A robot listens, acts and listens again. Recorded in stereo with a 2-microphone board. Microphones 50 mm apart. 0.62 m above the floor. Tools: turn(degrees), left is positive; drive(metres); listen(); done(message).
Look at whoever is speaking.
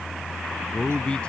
turn(degrees=20)
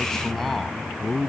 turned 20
turn(degrees=30)
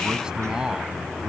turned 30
turn(degrees=-15)
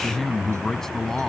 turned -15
turn(degrees=10)
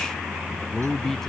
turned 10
done("Found it: a man speaking, straight ahead.")